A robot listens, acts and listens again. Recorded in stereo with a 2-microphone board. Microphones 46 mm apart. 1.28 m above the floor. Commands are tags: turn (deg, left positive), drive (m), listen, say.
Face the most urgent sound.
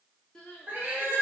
<turn deg="15"/>
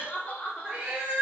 <turn deg="150"/>
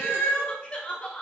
<turn deg="30"/>
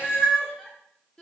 <turn deg="15"/>
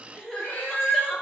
<say>Facing the crying, under 1 m away.</say>